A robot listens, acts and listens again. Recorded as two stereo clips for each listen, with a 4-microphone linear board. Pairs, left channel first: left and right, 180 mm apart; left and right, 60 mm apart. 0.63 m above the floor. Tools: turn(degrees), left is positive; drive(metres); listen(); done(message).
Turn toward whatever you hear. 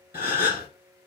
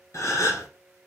turn(degrees=60)
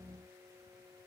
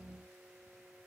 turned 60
listen()
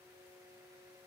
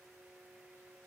done("I heard a gasp, but can't make it out now. It was about straight ahead or 60° left.")